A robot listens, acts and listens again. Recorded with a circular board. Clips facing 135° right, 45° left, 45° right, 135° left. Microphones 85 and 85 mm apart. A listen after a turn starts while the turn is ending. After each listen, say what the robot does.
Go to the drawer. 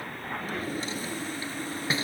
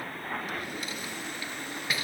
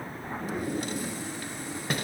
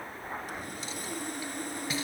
Turn 75° right.
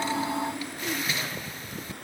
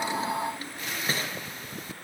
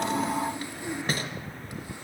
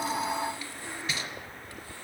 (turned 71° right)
Drive 1.0 m forward.
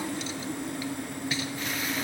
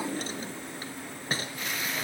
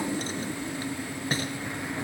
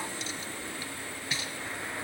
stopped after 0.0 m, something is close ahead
Something is in my way. I am facing the drawer but have not reached it.